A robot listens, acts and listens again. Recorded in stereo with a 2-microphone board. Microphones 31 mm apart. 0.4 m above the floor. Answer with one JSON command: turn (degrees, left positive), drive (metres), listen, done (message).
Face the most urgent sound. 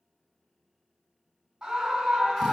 {"turn": -20}
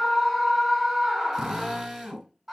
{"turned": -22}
{"done": "Found it: a scream, straight ahead."}